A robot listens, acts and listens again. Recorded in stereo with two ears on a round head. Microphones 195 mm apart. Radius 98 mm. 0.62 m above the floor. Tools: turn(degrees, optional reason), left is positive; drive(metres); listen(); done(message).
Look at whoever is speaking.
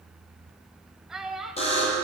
turn(degrees=30)
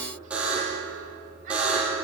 listen()
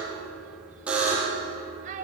turn(degrees=-35, reason="So it is at 35° right.")
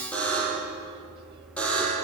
listen()
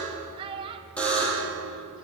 turn(degrees=-25, reason="The child speaking is now 25° right.")
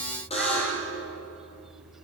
listen()
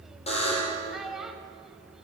done("Found it: a child speaking, straight ahead.")